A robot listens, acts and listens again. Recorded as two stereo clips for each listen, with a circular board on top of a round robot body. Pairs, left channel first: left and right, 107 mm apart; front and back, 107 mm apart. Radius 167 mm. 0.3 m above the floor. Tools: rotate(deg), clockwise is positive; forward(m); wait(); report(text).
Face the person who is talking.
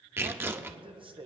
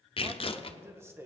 rotate(115)
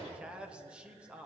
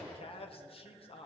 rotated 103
rotate(10)
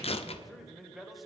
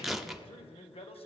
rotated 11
report("Found it: a man speaking, straight ahead.")